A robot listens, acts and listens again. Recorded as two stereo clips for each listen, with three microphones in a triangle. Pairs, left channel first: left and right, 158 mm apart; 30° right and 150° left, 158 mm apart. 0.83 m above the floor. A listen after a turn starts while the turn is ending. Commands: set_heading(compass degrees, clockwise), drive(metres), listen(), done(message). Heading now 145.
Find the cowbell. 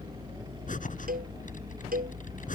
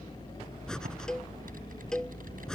set_heading(260)
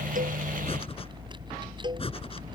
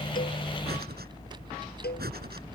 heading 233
set_heading(263)
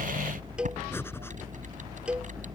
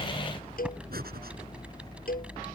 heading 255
done("Facing the cowbell.")